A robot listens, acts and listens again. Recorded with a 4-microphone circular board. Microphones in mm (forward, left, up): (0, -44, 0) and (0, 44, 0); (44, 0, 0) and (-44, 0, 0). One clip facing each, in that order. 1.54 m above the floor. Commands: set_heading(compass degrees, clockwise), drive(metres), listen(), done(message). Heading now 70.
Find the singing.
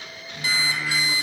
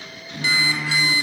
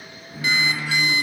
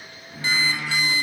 set_heading(355)
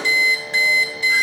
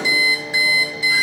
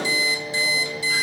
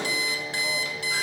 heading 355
done("Facing the singing, 1 to 2 m away.")